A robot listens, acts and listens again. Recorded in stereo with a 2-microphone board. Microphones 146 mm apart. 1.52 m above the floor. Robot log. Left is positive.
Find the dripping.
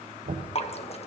note: The dripping: about 45° left or 135° left.
cmd yaw +45
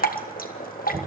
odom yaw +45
note: So it is at 90° left.
cmd yaw +90
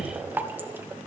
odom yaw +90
note: The dripping is now 15° right.
cmd yaw -15
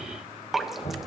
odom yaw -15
end: Facing the dripping.